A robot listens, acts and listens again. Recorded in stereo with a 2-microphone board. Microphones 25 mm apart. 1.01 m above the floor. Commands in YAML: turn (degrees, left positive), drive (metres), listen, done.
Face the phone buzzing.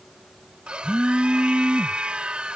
turn: -60
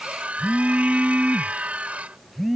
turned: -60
done: "Found it: a phone buzzing, straight ahead."